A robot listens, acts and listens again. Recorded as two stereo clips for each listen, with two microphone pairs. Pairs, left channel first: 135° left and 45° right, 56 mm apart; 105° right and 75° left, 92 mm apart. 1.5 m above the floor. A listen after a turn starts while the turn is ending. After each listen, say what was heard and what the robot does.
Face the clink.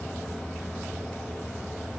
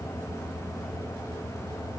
Keep listening.
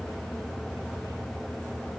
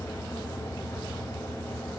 Keep listening.
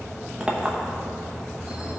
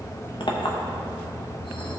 The clink: 115° right. Turn 115° right.
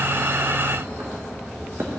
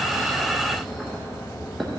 The clink is now 15° right. Turn 15° right.
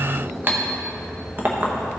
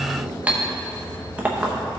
Found it: a clink, straight ahead, 1 to 2 m away.